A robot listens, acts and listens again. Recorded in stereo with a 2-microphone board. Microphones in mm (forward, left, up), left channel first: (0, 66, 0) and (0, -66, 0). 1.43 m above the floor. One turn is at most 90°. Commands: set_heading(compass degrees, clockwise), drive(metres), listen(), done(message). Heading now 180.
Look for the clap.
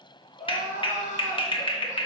set_heading(140)
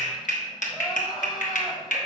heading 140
set_heading(50)
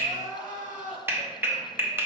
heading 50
set_heading(65)
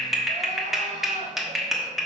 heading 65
done("Facing the clap, 1 to 2 m away.")